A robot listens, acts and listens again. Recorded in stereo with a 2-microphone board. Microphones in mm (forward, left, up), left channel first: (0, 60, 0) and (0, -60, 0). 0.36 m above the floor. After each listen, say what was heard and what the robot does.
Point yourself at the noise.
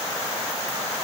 Keep listening.
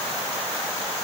Keep listening.
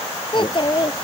The child speaking: about 45° left or 135° left. Turn 45° left.
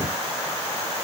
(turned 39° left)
Keep listening.
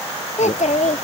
So it is at 95° left. Turn 95° left.
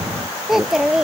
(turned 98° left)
Facing the child speaking.